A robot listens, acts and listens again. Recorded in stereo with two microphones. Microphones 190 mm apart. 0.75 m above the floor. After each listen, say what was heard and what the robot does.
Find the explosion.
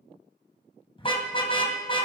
Keep listening.
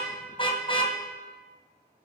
Keep listening.
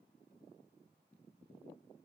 I can't make out an explosion, only a car horn.